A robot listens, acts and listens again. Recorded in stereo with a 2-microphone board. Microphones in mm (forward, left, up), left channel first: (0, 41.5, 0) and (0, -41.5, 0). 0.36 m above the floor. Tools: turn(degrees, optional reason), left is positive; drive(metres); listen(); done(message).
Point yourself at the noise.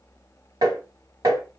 turn(degrees=-55, reason="The tapping: about 55° right or 125° right.")
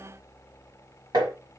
turn(degrees=-65, reason="So it is at 65° right.")
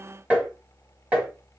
turn(degrees=-15, reason="The tapping is now 15° right.")
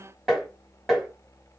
done("Facing the tapping.")